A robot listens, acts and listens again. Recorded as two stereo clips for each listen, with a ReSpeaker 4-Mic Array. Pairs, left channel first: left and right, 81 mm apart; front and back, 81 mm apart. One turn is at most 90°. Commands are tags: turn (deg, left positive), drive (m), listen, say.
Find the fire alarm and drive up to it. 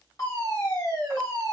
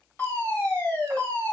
<turn deg="55"/>
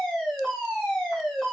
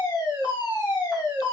<drive m="1.0"/>
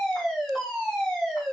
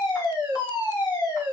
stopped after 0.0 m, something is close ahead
<say>Blocked. The fire alarm is further on, straight ahead.</say>